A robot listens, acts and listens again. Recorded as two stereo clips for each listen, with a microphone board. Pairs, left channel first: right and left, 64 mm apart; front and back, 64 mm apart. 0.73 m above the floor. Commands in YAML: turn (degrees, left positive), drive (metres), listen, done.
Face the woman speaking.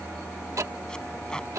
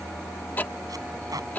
listen: true
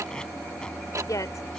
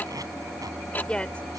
turn: -75
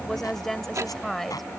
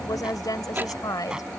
done: "Facing the woman speaking."